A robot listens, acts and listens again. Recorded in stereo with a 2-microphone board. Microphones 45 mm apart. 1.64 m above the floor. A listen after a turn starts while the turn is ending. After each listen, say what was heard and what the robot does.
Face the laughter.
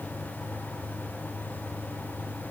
Keep listening.
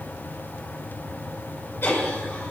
The laughter: about 60° left or 120° left. Turn 60° left.
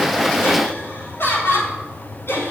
So it is at 55° left. Turn 55° left.
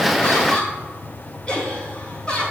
The laughter is now 25° left. Turn 25° left.
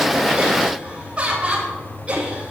The laughter is now 25° right. Turn 25° right.
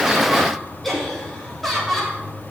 Facing the laughter, over 4 m away.